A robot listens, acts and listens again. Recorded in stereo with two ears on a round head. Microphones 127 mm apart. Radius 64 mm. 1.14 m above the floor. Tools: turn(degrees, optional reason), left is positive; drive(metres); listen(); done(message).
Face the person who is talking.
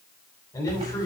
turn(degrees=20, reason="The man speaking: about 20° left or 160° left.")
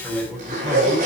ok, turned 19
done("Found it: a man speaking, straight ahead, over 4 m away.")